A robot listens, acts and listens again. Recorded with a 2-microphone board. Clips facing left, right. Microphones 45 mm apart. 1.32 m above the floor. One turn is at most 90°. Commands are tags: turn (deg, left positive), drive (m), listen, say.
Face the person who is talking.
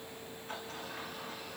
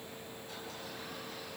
<listen/>
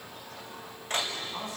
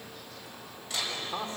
<turn deg="-45"/>
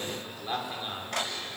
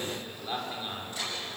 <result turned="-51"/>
<say>Found it: a man speaking, straight ahead.</say>